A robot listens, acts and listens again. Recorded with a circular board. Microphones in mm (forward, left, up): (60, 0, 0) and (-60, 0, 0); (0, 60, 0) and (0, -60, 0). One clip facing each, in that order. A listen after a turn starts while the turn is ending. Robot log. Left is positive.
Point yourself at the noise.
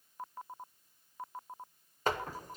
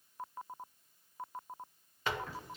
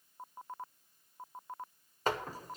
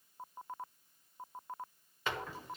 note: The door slam: 45° left.
cmd yaw +45
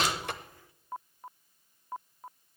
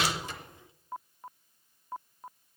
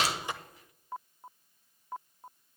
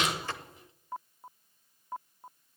end: I heard a door slam from this way, but can't make it out now.